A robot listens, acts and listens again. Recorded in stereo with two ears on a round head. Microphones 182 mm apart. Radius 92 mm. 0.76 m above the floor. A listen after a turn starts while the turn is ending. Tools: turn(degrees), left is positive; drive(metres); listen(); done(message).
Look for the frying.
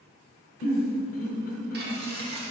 turn(degrees=-50)
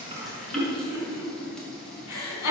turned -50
done("Found it: frying, straight ahead.")